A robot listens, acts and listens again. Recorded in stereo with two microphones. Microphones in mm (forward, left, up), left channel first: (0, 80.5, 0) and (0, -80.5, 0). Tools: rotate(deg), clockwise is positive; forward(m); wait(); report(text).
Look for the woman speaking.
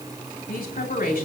rotate(-90)
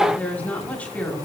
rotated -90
rotate(-10)
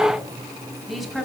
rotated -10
report("Facing the woman speaking.")